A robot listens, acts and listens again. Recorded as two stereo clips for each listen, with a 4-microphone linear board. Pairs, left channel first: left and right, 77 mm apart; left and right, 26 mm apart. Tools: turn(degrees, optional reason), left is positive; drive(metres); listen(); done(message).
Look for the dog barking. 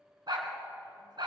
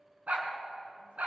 turn(degrees=-70, reason="The dog barking: about 70° right or 110° right.")
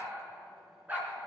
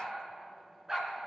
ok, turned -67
turn(degrees=-25, reason="So it is at 25° right.")
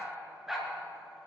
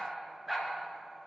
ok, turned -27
done("Found it: a dog barking, straight ahead, 2 to 4 m away.")